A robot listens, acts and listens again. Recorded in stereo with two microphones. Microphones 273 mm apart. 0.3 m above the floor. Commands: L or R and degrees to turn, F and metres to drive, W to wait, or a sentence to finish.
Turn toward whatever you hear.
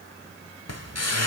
L65
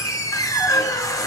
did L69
L15
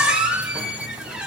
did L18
Found it: a squeak, straight ahead.